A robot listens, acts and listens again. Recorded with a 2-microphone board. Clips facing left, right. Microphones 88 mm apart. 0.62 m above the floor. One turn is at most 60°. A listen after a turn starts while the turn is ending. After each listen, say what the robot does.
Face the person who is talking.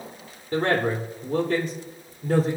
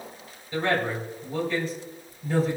Turn 60° left.
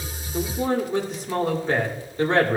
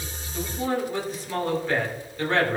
Turn 25° left.
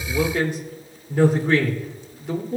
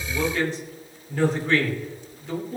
Turn 15° left.
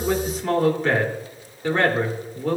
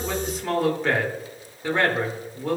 Facing the man speaking, 2 to 4 m away.